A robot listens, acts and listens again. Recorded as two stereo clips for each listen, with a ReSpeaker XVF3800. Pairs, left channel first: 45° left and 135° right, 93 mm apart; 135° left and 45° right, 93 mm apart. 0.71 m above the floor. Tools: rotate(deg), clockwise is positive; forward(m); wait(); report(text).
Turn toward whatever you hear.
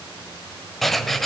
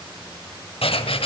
rotate(-135)
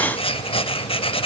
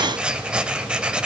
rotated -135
rotate(-35)
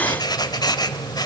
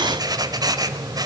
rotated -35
report("Facing the writing, 1 to 2 m away.")